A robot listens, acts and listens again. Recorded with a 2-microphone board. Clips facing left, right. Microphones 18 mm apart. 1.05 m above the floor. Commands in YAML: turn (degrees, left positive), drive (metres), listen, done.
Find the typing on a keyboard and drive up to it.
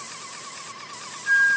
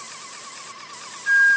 listen: true
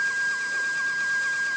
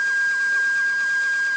listen: true
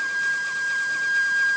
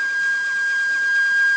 done: "I can't make out typing on a keyboard to turn to."